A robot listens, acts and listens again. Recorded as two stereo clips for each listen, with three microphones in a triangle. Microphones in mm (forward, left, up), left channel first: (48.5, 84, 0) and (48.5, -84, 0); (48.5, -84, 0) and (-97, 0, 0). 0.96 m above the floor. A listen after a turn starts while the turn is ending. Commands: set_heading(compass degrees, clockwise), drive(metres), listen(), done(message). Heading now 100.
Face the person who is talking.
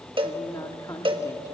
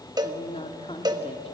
set_heading(80)
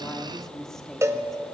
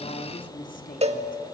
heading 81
done("Facing the woman speaking.")